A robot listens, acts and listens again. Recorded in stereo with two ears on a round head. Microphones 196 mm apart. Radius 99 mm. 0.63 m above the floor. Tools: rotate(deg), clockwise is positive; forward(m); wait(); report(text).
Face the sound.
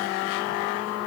wait()
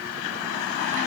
wait()
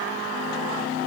report("I can't make out anything.")